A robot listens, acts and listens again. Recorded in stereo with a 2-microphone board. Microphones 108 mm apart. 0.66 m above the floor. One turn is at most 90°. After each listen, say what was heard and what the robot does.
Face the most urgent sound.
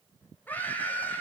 The scream: about 15° left or 165° left. Turn 15° left.
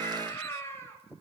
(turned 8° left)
The scream: about 25° left or 155° left. Turn 25° left.
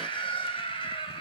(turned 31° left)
So it is at 125° left. Turn 90° left.
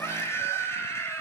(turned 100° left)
The scream is now 25° left. Turn 25° left.
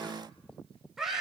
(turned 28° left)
Facing the scream, 2 to 4 m away.